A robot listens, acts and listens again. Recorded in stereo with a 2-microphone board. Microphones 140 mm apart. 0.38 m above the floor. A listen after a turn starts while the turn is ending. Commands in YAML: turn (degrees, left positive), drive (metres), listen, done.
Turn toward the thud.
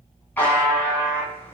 listen: true
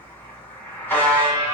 listen: true
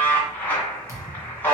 turn: -20
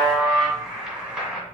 listen: true
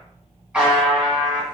done: "I heard a thud, but can't make it out now. It was about straight ahead or 140° right."